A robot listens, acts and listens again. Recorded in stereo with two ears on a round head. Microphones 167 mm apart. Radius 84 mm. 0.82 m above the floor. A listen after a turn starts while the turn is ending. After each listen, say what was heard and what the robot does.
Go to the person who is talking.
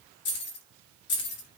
Keep listening.
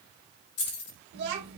The child speaking: about 65° right or 115° right. Turn 65° right.
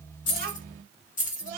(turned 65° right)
So it is at 45° right. Turn 45° right.
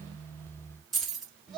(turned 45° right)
Drive 1.0 m forward.
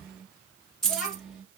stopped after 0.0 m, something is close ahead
Something is in my way. I am facing the child speaking but have not reached it.